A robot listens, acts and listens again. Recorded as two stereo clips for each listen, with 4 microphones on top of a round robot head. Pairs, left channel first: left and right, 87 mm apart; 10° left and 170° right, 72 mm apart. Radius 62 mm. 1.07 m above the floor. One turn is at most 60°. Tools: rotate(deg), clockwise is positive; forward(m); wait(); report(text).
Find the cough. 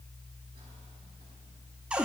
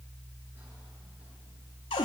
wait()
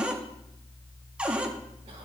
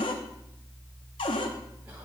wait()
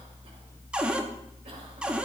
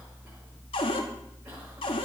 report("I can't make out a cough, only a cupboard door.")